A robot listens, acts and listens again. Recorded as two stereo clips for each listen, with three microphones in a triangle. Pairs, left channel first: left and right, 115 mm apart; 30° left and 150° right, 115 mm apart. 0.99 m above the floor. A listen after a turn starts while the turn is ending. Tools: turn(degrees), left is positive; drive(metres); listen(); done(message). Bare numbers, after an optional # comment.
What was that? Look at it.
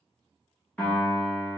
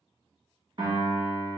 # The piano: 165° left.
turn(165)
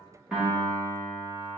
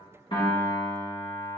# The piano is now 20° right.
turn(-20)
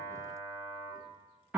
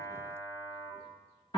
done("Facing the piano.")